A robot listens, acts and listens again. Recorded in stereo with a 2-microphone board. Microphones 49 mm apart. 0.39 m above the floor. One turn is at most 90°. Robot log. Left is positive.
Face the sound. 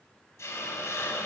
cmd yaw +90
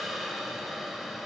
end: Facing the hiss, under 1 m away.